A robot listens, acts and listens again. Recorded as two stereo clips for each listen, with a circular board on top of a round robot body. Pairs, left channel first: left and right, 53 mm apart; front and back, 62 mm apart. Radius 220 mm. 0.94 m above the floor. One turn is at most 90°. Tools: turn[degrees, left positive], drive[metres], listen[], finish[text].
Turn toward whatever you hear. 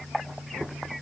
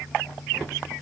Action: listen[]
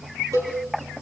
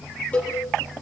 Thought: The cowbell: 70° right.
Action: turn[-70]
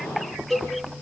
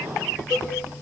Action: finish[Found it: a cowbell, straight ahead.]